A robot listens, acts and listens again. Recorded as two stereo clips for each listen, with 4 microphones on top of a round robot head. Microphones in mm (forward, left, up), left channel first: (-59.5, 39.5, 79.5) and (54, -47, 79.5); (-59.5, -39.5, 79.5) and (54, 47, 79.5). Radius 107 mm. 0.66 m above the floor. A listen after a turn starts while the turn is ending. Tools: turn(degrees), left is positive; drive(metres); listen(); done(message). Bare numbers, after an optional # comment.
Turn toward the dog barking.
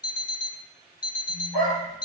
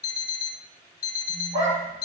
done("Found it: a dog barking, straight ahead, 2 to 4 m away.")